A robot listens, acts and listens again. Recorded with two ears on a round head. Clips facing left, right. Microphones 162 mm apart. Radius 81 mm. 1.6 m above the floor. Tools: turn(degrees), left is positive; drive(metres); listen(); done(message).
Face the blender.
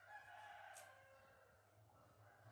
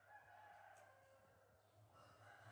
listen()
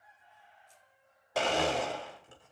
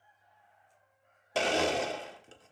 turn(degrees=-30)
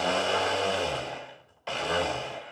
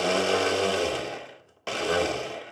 turn(degrees=-115)
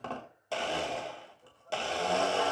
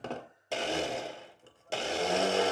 turn(degrees=-20)
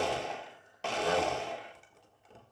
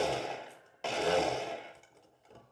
done("Facing the blender.")